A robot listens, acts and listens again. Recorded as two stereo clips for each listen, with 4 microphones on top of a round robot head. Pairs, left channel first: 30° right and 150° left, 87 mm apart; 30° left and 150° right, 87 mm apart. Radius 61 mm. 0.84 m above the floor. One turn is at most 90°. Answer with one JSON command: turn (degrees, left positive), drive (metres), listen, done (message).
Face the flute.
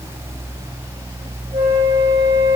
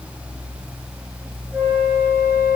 {"turn": 90}
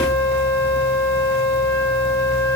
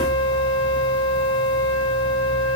{"turn": 40}
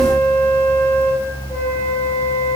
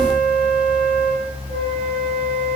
{"turn": 10}
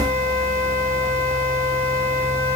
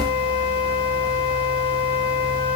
{"done": "Found it: a flute, straight ahead, 1 to 2 m away."}